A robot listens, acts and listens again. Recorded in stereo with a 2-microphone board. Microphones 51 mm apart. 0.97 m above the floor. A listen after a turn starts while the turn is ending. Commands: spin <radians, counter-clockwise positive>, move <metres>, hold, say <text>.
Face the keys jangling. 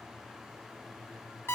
hold
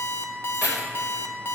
spin -0.52
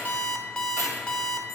hold
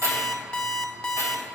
spin -1.92
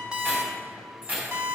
spin -0.61
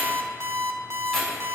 say Found it: keys jangling, straight ahead.